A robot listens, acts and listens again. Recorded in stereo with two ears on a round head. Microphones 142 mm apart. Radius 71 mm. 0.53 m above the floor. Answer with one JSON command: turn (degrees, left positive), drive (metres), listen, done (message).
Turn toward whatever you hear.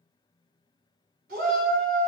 {"turn": -70}
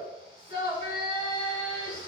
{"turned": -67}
{"turn": -40}
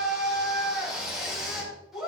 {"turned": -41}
{"done": "Facing the shout, over 4 m away."}